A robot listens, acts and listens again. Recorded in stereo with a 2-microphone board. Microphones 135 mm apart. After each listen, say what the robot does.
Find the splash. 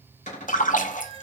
Turn 70° left.
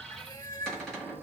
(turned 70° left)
Keep listening.
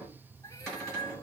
I heard a splash, but can't make it out now. It was about straight ahead or 40° left.